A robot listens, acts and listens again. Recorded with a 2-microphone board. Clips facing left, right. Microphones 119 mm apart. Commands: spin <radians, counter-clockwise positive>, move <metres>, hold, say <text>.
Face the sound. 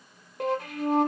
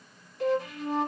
spin 1.05
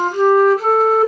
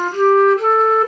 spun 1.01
say Found it: a flute, straight ahead, 1 to 2 m away.